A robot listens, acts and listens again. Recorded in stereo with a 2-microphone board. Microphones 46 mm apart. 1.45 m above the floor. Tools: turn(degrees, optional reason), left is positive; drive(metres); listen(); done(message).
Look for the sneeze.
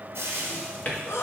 turn(degrees=75, reason="The sneeze: about 75° left or 105° left.")
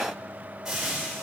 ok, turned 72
listen()
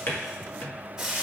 done("I heard a sneeze, but can't make it out now. It was about straight ahead or 35° left.")